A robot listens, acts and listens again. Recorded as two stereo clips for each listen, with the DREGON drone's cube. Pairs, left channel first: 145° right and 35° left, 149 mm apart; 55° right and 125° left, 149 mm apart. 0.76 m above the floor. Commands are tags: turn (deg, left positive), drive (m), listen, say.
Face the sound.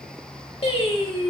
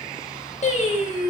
<turn deg="-100"/>
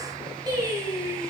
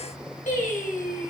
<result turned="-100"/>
<turn deg="-30"/>
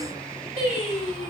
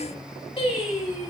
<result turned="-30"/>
<turn deg="-10"/>
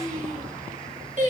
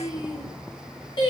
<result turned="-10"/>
<say>Facing the singing.</say>